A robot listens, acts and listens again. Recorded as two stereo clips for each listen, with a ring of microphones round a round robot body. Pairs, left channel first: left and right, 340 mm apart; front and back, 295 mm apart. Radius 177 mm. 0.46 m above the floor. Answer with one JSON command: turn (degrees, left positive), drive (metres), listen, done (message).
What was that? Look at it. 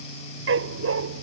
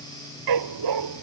{"turn": -145}
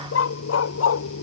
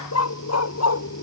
{"turn": 40}
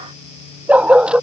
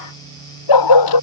{"done": "Facing the dog barking."}